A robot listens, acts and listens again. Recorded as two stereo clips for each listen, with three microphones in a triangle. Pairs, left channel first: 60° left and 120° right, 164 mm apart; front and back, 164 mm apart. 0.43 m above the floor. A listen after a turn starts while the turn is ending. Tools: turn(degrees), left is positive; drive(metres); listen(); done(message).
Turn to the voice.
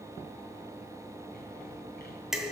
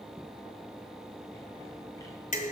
listen()
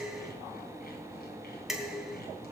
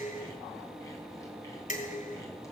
listen()
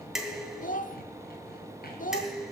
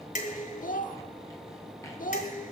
turn(degrees=30)
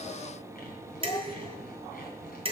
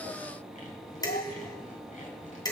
listen()
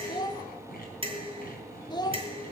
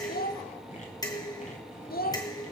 done("Found it: a child speaking, straight ahead, under 1 m away.")